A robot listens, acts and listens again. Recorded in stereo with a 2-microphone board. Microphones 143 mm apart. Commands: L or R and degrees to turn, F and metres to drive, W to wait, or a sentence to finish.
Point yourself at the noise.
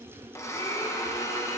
L20
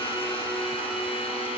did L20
L140
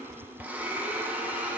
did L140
R10
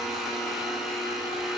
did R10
Found it: a blender, straight ahead.